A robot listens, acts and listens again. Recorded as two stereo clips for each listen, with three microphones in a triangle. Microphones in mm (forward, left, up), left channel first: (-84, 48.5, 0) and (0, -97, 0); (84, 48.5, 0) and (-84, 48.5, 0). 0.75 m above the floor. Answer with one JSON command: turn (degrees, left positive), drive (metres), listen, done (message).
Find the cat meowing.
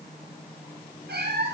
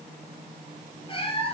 {"turn": -55}
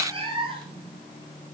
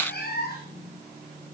{"done": "Facing the cat meowing."}